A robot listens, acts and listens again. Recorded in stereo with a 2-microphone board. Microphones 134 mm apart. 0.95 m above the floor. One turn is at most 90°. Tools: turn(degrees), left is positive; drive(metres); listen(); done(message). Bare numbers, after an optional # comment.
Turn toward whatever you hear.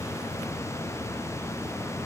listen()
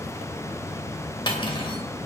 # The cutlery clinking: about 35° left or 145° left.
turn(35)
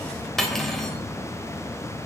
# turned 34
done("Found it: cutlery clinking, straight ahead.")